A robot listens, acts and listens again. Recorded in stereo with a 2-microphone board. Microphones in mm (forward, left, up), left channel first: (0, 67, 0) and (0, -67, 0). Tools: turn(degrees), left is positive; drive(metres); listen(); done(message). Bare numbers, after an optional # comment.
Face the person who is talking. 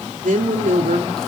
turn(-90)
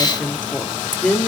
# So it is at 10° left.
turn(10)
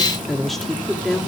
done("Facing the woman speaking, 2 to 4 m away.")